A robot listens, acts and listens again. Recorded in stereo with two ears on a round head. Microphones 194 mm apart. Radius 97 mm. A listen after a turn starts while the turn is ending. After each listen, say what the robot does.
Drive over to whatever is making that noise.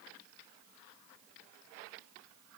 Keep listening.
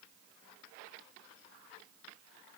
Keep listening.
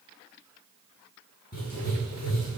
Turn 45° left.
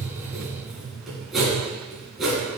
Drive 1.0 m forward.
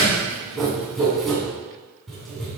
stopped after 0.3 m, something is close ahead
Something is in my way. I am facing the writing but have not reached it.